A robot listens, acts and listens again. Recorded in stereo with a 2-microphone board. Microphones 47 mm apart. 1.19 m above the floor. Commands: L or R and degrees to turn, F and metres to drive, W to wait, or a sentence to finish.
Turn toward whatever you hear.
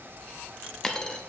L30
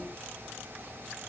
W
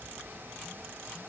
I heard a dropped coin, but can't make it out now. It was about 20° right or 140° left.